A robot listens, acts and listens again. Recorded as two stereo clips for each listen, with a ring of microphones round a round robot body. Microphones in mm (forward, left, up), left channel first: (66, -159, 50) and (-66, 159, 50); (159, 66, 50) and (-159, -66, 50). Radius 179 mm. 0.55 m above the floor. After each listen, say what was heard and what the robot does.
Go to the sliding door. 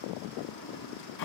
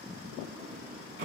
The sliding door: 90° right. Turn 90° right.
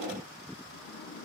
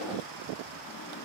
Keep listening.
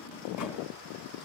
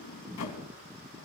The sliding door is now 20° right. Turn 20° right.
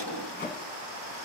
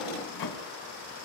Drive 1.0 m forward.
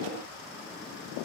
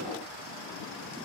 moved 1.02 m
Keep listening.
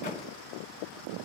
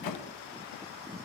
Drive 1.0 m forward.
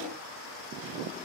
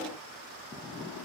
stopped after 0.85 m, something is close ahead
Keep listening.
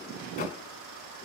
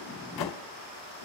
Arrived at the sliding door, straight ahead.